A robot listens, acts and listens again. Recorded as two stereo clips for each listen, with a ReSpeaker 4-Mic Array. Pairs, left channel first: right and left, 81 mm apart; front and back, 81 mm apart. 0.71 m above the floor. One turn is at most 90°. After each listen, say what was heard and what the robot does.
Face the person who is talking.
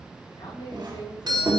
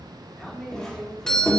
The man speaking: 90° right. Turn 90° right.
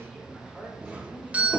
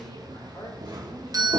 Found it: a man speaking, straight ahead, 2 to 4 m away.